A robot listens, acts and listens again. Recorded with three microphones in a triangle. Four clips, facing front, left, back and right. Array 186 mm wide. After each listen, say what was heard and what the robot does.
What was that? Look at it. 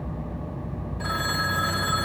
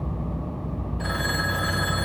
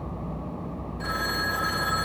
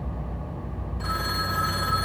The phone ringing: 60° left. Turn 60° left.
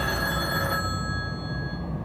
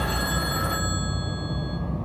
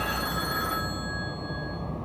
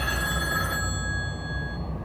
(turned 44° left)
The phone ringing is now 15° left. Turn 15° left.
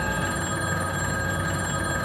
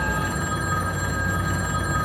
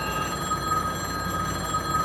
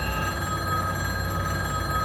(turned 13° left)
Facing the phone ringing, 1 to 2 m away.